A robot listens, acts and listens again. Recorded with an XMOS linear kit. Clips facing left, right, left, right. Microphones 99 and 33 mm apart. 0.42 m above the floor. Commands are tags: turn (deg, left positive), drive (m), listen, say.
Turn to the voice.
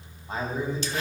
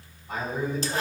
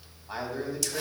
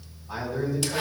<turn deg="30"/>
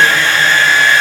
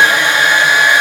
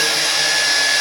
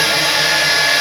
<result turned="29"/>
<listen/>
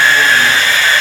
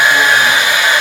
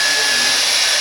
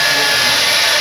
<listen/>
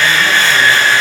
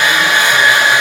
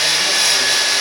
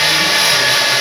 <say>I heard a man speaking, but can't make it out now. It was about straight ahead or 120° left.</say>